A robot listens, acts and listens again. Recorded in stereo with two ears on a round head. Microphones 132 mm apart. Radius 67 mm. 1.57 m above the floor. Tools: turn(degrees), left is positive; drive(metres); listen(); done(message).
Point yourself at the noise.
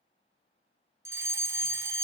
turn(degrees=-15)
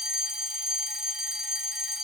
done("Facing the fire alarm, 1 to 2 m away.")